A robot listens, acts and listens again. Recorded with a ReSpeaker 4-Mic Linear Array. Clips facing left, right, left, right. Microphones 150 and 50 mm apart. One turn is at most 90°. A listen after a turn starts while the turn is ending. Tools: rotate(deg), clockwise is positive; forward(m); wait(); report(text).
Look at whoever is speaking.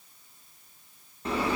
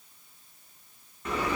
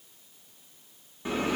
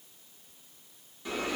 wait()
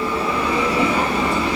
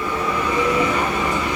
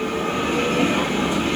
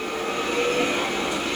wait()
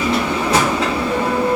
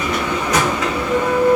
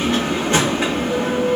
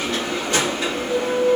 report("I can't make out anyone speaking to turn to.")